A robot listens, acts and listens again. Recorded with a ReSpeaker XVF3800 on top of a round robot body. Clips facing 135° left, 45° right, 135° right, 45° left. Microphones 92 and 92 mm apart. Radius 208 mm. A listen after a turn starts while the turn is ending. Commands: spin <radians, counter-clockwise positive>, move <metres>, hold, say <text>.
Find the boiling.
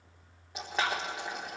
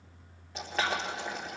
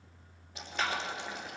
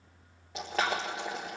spin 1.05
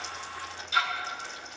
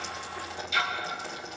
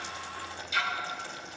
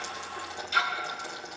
spin 0.26
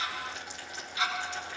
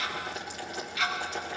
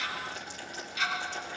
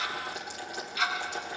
say Facing the boiling, 1 to 2 m away.